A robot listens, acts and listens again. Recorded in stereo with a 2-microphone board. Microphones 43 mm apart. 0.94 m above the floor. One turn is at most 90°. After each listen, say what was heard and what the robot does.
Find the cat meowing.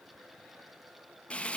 Keep listening.
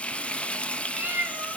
The cat meowing: about 45° right or 135° right. Turn 45° right.
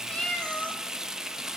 So it is at 25° left. Turn 25° left.
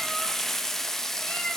Keep listening.
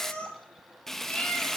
The cat meowing is now 25° left. Turn 25° left.
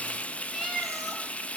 Found it: a cat meowing, straight ahead.